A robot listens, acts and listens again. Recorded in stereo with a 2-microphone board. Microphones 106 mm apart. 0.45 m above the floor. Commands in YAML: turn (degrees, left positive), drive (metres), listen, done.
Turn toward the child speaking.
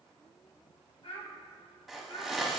turn: 75
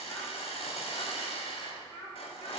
turn: 35
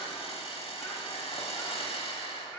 listen: true
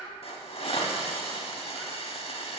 done: "Found it: a child speaking, straight ahead."